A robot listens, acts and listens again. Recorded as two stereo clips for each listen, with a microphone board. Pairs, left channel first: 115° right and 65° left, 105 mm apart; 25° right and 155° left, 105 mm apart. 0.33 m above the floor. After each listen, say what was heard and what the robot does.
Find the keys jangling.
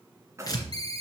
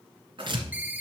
The keys jangling: 130° left. Turn 130° left.
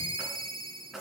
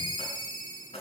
The keys jangling is now 20° right. Turn 20° right.
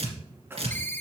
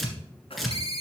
Facing the keys jangling, 2 to 4 m away.